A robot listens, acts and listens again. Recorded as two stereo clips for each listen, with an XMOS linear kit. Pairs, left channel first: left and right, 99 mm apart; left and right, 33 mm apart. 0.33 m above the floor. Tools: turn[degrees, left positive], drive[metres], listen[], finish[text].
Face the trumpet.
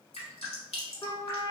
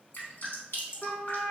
Thought: The trumpet: about 40° left or 140° left.
Action: turn[40]
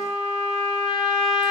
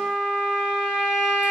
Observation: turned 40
Action: finish[Found it: a trumpet, straight ahead, 1 to 2 m away.]